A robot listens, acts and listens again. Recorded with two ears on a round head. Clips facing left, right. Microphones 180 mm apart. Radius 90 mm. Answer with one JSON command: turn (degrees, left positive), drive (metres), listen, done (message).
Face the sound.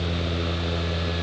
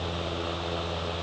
{"listen": true}
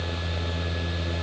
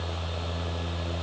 {"listen": true}
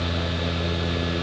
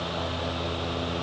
{"done": "I can't make out anything to turn to."}